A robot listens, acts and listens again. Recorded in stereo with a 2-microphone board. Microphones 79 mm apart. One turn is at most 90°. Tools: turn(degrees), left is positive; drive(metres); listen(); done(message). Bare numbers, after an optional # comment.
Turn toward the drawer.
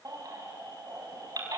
listen()
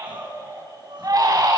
listen()
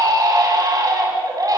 done("I can't make out a drawer, only a baby crying and crying.")